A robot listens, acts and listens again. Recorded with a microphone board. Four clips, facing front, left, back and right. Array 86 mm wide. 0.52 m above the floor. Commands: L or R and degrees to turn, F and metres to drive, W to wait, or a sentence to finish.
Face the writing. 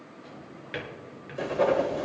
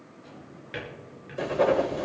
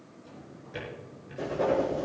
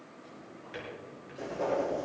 L60
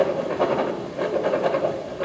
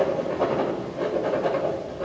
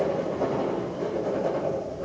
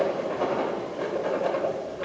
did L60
Facing the writing, 1 to 2 m away.